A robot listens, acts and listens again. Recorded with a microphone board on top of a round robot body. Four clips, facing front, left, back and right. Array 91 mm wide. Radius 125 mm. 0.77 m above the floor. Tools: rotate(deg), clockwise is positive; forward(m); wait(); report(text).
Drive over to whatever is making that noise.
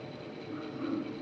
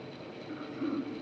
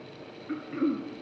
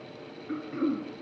rotate(145)
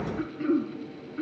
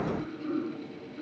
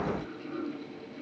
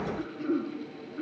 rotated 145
rotate(20)
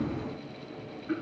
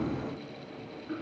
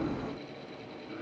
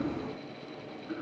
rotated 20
forward(1.0)
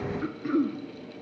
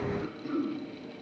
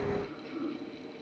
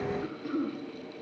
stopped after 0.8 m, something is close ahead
report("Something is in my way. I am facing the throat clearing but have not reached it.")